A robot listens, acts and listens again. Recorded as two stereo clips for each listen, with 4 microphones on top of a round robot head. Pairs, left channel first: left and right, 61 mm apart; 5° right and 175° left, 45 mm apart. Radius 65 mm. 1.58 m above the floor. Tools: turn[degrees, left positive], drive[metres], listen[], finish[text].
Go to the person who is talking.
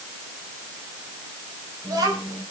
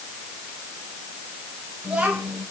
Thought: The child speaking: 110° right.
Action: turn[-110]
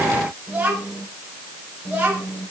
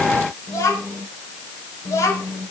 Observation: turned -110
Thought: The child speaking is now 15° right.
Action: turn[-15]
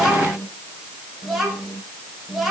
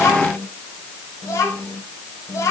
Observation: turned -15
Action: drive[1.0]
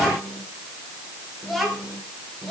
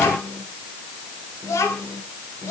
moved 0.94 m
Action: drive[1.0]
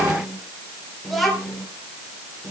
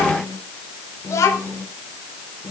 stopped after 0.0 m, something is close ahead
Action: finish[Something is in my way. I am facing the child speaking but have not reached it.]